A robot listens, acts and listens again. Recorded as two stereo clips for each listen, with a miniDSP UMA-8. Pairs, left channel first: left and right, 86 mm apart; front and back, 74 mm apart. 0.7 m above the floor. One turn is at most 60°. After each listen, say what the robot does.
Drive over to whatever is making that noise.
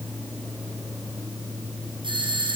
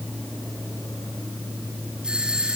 Turn 60° right.
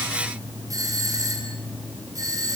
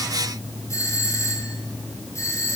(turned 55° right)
Turn 45° right.
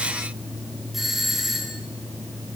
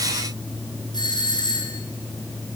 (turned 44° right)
Drive 1.0 m forward.
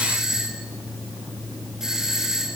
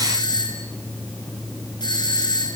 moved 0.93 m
Drive 1.0 m forward.
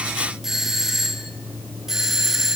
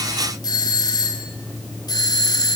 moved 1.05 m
Drive 1.0 m forward.
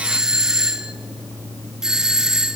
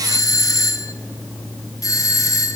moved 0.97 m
Turn 10° right.
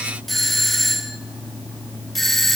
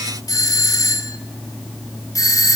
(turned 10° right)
Drive 1.0 m forward.
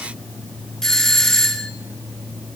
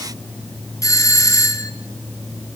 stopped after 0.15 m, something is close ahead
Turn 10° left.
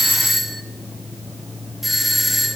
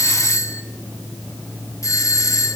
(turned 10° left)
Arrived at the doorbell, straight ahead.